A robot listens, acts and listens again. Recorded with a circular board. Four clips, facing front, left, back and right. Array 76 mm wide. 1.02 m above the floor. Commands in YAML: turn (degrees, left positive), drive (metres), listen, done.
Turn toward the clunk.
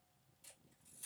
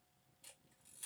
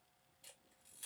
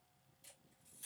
listen: true
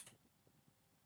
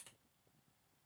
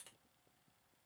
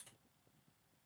listen: true
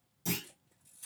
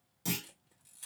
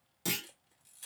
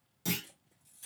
turn: 180
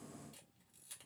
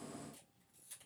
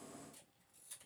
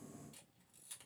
done: "I heard a clunk from this way, but can't make it out now."